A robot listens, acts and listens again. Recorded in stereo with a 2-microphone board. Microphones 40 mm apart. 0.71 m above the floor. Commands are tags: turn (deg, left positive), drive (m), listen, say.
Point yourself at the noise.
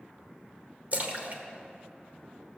<turn deg="-40"/>
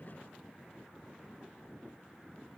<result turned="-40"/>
<listen/>
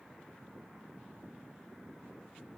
<say>I heard a splash, but can't make it out now. It was about straight ahead or 100° right.</say>